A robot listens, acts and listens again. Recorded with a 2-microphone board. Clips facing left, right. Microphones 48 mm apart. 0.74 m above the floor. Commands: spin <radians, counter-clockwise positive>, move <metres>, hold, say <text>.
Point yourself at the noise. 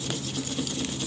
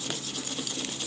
hold
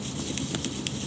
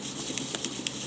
hold
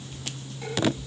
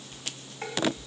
spin -0.70
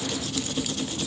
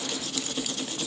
hold
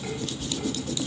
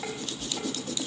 spin -1.75
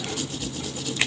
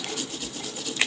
spin -0.61
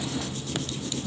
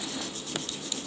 hold
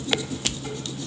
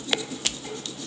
say Facing the dishes clattering, 2 to 4 m away.